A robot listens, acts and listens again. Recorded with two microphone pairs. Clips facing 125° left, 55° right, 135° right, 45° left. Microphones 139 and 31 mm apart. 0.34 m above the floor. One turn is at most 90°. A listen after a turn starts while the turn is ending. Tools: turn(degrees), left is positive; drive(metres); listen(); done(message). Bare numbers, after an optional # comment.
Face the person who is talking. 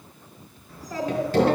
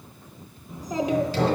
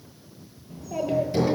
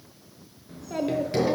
# The child speaking: 15° left.
turn(15)
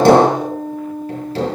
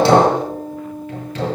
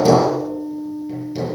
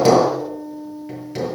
listen()
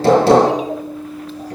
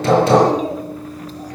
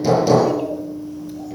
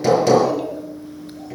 listen()
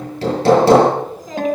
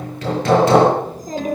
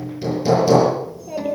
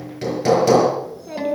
done("Facing the child speaking, 2 to 4 m away.")